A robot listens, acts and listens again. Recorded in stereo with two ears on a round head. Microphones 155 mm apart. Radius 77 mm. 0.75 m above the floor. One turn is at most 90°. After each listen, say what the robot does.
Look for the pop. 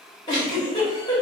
Keep listening.
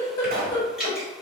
Turn 50° right.
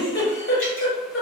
Keep listening.
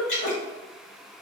I heard a pop, but can't make it out now. It was about straight ahead or 80° right.